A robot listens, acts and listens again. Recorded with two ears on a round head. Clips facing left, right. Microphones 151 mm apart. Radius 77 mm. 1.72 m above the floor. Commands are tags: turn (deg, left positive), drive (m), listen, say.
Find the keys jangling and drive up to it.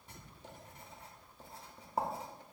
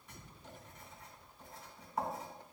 <listen/>
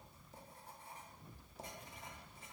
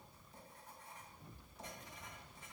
<listen/>
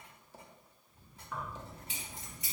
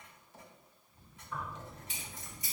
<turn deg="55"/>
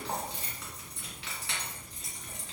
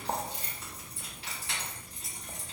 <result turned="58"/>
<turn deg="60"/>
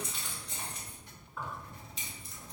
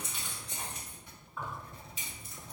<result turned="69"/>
<drive m="1.0"/>
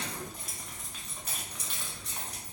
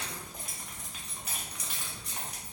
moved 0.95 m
<turn deg="-10"/>
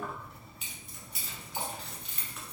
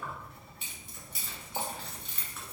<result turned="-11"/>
<drive m="1.0"/>
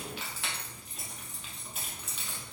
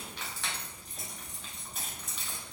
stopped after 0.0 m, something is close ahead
<say>I am next to the keys jangling.</say>